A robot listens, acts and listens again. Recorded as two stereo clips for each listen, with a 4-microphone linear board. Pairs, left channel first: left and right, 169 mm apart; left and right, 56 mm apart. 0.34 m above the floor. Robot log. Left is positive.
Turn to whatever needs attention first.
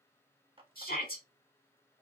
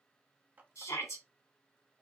note: The shout: about 60° left or 120° left.
cmd yaw +60
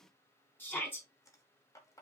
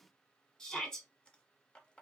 note: So it is at 15° left.
cmd yaw +15
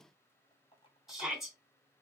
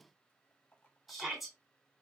end: Found it: a shout, straight ahead, 2 to 4 m away.